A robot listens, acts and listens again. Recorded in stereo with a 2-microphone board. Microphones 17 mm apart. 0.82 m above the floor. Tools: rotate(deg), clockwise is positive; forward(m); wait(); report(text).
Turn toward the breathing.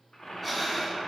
rotate(-30)
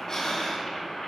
rotate(-140)
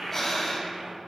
report("Found it: breathing, straight ahead.")